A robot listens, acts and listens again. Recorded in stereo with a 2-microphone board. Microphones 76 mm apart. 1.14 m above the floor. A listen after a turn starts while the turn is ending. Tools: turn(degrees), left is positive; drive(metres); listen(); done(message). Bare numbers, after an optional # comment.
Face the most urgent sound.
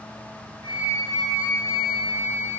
listen()
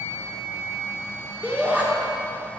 # The shout: about 20° right or 160° right.
turn(-20)
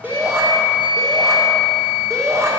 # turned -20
# So it is at 140° right.
turn(-140)
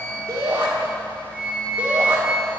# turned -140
# The shout is now 25° right.
turn(-25)
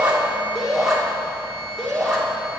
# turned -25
done("Found it: a shout, straight ahead.")